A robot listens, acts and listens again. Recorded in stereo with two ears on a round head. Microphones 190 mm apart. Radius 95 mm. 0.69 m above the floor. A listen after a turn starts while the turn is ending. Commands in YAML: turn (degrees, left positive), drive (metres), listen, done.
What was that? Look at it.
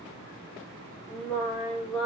turn: 30
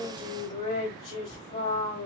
turn: 145
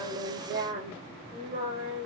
turn: -40
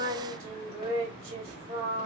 turn: -30
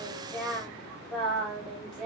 done: "Found it: singing, straight ahead, 2 to 4 m away."